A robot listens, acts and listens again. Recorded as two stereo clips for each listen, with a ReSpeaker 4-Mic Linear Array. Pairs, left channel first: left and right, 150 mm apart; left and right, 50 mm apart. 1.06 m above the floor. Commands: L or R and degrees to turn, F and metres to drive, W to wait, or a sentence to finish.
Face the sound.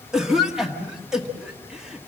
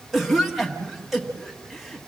R30
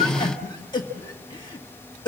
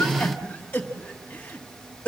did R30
L25
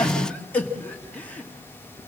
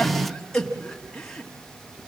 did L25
L10
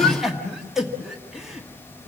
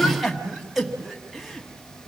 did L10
Found it: a cough, straight ahead, 1 to 2 m away.